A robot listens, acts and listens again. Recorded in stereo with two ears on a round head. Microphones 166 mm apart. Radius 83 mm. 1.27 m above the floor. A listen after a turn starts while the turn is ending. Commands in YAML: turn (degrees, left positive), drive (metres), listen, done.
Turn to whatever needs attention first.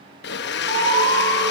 turn: -75
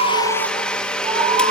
turn: -30
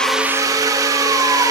listen: true
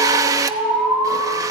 done: "Facing the alarm."